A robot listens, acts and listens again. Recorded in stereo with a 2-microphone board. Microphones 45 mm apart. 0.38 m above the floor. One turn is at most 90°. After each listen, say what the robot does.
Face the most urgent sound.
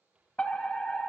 Turn 25° left.
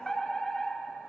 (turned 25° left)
Turn 10° left.
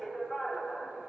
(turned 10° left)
Facing the fire alarm.